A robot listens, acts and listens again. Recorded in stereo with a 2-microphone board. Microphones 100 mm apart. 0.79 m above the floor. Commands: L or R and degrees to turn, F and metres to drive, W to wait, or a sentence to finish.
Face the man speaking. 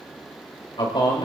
L60
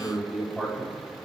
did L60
Found it: a man speaking, straight ahead.